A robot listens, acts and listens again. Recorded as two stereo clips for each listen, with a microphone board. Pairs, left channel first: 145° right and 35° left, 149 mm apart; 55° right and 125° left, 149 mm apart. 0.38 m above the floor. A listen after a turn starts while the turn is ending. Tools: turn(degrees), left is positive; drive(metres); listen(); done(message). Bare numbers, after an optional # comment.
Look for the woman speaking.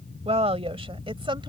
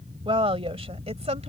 # The woman speaking: 85° left.
turn(85)
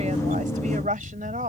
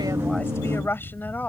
# The woman speaking is now 20° left.
turn(20)
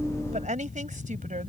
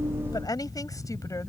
# The woman speaking is now 10° left.
turn(10)
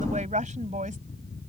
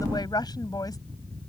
done("Facing the woman speaking.")